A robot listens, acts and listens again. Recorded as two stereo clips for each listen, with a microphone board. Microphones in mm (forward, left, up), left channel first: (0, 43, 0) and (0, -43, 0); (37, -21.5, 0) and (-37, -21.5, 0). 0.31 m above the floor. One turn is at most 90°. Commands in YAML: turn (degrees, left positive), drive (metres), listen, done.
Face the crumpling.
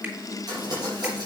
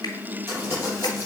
turn: -90
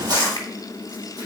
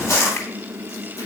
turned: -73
turn: -50
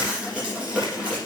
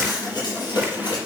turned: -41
turn: -10
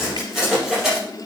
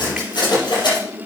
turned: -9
done: "Found it: crumpling, straight ahead, over 4 m away."